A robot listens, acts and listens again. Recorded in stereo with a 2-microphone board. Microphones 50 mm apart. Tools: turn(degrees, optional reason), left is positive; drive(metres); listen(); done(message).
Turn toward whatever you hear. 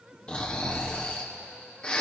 turn(degrees=25, reason="The snoring: about 25° left or 155° left.")
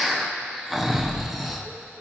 done("Facing the snoring, under 1 m away.")